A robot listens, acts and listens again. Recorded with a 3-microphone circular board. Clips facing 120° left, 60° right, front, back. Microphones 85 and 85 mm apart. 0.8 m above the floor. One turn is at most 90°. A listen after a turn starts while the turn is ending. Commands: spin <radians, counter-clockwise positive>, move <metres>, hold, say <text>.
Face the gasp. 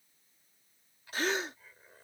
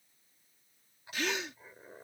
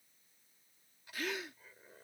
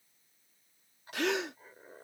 spin 1.57
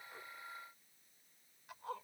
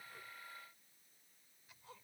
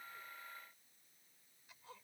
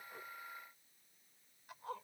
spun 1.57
spin 1.40
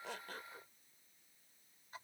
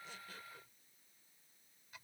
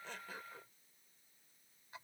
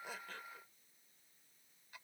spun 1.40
say Facing where the gasp came from. I can't hear it now.